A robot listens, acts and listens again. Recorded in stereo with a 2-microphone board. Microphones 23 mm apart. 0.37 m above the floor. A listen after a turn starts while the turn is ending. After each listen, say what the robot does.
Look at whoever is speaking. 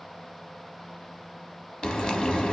Keep listening.
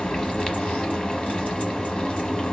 Keep listening.
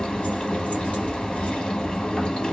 I can't make out anyone speaking to turn to.